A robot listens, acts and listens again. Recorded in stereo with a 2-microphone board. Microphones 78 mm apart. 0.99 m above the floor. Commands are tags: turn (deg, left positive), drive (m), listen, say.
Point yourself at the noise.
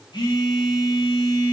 <turn deg="75"/>
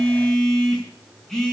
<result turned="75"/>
<say>Found it: a phone buzzing, straight ahead.</say>